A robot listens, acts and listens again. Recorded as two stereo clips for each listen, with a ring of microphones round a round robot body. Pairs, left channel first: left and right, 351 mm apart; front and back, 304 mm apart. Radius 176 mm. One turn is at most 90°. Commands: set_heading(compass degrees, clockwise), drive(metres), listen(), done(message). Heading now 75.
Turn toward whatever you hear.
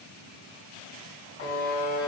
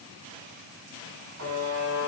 set_heading(345)
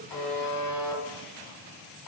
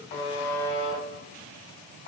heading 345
set_heading(290)
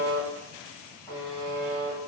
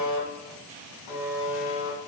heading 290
set_heading(280)
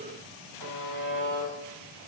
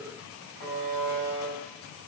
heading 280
done("Found it: a buzzer, straight ahead.")